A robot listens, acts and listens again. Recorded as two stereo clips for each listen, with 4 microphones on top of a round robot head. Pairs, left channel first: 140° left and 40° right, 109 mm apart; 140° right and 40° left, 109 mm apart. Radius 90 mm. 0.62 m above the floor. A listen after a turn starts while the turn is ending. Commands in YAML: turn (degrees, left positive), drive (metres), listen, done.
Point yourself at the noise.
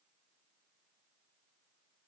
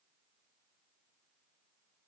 listen: true
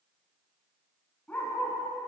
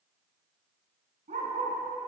turn: 65
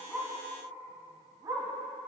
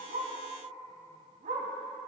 turn: 20
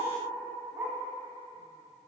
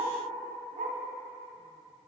turn: 25
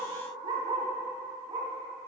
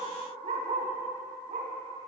turn: 10
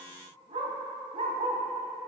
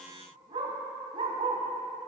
done: "Found it: a dog barking, straight ahead, 1 to 2 m away."